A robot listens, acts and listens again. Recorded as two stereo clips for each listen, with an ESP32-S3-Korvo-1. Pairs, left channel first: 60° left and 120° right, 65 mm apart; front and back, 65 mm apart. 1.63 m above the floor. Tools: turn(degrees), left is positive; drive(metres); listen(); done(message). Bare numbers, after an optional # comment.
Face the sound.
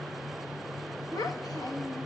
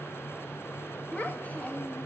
# The child speaking: 70° left.
turn(70)
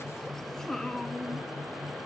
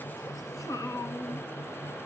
# The child speaking is now 20° right.
turn(-20)
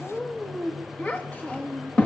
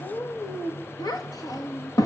done("Found it: a child speaking, straight ahead, 1 to 2 m away.")